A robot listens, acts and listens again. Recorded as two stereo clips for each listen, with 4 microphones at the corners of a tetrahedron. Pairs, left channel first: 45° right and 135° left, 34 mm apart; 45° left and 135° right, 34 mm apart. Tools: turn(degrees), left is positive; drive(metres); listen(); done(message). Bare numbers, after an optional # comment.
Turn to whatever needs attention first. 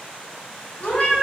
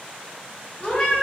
listen()
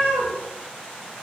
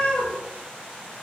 listen()
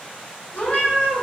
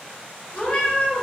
done("I can't make out anything urgent to turn to.")